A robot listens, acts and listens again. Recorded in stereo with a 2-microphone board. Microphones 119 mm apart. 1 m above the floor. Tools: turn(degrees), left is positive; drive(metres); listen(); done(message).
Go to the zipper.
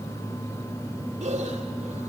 listen()
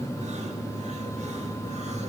listen()
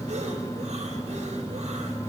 done("I can't make out a zipper to turn to.")